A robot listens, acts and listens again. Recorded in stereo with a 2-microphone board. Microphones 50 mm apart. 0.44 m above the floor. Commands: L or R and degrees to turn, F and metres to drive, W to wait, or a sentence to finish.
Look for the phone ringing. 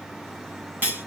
W
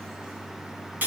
W
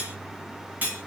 I can't make out a phone ringing to turn to.